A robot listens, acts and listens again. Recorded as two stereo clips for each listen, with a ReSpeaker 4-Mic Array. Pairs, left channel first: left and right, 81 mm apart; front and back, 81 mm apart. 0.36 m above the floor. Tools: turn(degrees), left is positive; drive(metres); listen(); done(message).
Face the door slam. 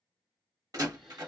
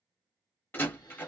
turn(degrees=-60)
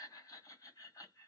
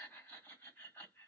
done("I heard a door slam from this way, but can't make it out now.")